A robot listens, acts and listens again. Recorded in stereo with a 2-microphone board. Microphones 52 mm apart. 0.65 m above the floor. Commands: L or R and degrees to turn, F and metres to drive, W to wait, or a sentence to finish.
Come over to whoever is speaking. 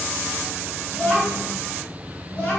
L25
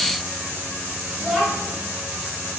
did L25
F1.0
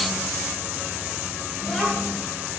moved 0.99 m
F1.0
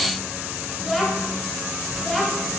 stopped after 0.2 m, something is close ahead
Arrived at the child speaking, straight ahead.